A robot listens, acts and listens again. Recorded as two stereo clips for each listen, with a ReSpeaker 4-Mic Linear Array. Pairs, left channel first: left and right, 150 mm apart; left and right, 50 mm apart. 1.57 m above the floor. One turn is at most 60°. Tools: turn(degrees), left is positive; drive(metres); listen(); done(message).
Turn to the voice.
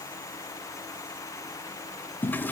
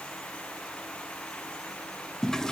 listen()
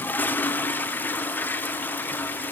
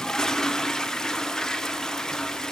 listen()
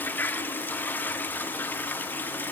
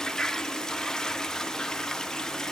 done("I can't make out anyone speaking to turn to.")